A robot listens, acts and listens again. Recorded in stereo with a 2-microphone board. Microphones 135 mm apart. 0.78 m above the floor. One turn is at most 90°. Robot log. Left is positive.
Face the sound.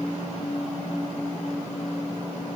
cmd idle
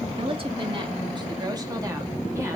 note: The woman speaking: about 45° right or 135° right.
cmd yaw -45
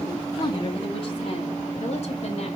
note: So it is at 35° left.
cmd yaw +35
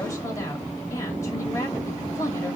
note: The woman speaking is now 20° left.
cmd yaw +20
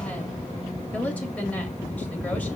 note: The woman speaking is now 10° left.
cmd yaw +10
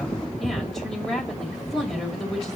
end: Facing the woman speaking, 2 to 4 m away.